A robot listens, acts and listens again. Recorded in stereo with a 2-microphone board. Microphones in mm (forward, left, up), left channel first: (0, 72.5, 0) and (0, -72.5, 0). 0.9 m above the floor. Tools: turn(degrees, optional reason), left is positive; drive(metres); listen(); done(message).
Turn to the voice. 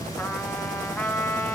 listen()
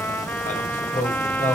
turn(degrees=70, reason="The man speaking: about 70° left or 110° left.")
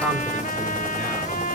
listen()
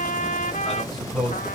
done("Facing the man speaking.")